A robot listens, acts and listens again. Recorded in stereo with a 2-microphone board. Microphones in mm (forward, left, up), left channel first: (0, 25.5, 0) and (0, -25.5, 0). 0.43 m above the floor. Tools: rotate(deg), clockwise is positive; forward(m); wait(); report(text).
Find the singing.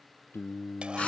rotate(-55)
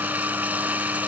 wait()
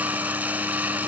wait()
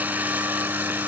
report("I heard singing, but can't make it out now. It was about straight ahead or 70° left.")